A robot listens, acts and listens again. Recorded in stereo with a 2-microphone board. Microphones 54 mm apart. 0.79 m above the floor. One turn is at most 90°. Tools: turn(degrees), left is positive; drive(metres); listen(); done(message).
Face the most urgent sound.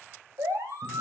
turn(degrees=-90)
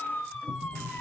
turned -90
turn(degrees=10)
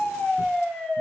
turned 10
done("Found it: a siren, straight ahead.")